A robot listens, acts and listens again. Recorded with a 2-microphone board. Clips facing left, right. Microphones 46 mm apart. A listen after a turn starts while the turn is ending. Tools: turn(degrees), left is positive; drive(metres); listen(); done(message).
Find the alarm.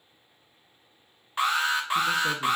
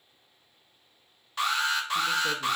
turn(degrees=25)
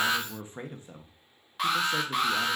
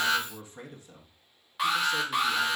done("Found it: an alarm, straight ahead.")